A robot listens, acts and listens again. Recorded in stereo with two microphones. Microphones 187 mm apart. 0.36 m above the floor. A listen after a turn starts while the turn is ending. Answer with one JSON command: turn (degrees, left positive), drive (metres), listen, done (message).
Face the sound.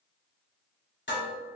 {"turn": 65}
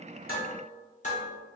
{"turn": 40}
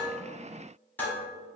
{"turn": 10}
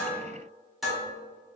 {"done": "Facing the dishes clattering."}